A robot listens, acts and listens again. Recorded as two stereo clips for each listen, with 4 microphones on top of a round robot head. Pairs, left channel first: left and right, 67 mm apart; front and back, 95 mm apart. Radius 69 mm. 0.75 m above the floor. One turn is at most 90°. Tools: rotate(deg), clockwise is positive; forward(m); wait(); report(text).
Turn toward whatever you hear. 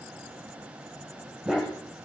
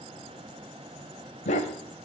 report("Found it: a dog barking, straight ahead, 1 to 2 m away.")